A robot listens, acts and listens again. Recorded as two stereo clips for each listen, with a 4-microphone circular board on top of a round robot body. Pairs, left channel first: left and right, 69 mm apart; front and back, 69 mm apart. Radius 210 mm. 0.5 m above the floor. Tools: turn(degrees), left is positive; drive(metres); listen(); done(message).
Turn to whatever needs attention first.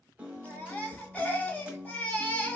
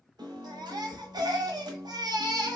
turn(degrees=160)
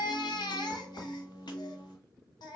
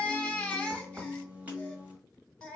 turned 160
turn(degrees=75)
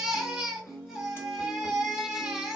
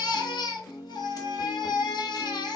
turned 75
done("Facing the baby crying, under 1 m away.")